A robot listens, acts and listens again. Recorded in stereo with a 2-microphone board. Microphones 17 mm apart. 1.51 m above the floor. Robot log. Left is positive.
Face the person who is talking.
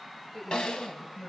cmd yaw +30
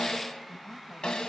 cmd idle
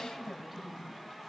note: So it is at 15° right.
cmd yaw -15
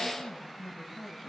end: Facing the woman speaking.